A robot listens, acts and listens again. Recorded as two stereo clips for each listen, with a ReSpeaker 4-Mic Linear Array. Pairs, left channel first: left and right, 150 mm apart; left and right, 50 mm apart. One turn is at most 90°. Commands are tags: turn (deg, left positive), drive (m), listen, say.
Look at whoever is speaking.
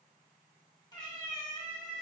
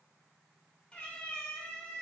<listen/>
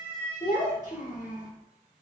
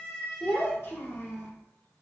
<turn deg="60"/>
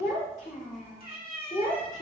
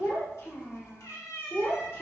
<turn deg="60"/>
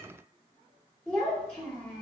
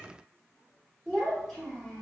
<say>Found it: a child speaking, straight ahead, 2 to 4 m away.</say>